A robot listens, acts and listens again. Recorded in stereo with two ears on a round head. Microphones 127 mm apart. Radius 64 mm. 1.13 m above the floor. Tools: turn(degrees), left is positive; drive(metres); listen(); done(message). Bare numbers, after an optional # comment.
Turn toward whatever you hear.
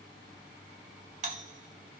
# The doorbell: about 60° right or 120° right.
turn(-60)
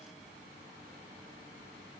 listen()
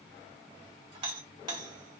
# So it is at 40° right.
turn(-40)
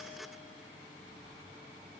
listen()
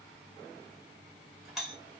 done("Facing the doorbell.")